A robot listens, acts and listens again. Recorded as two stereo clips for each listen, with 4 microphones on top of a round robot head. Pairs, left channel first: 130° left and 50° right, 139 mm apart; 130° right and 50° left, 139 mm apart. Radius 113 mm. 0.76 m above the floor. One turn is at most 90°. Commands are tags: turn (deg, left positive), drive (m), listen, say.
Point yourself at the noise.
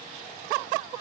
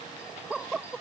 <listen/>
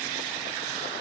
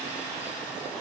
<listen/>
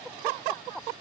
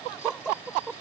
<say>I can't make out anything.</say>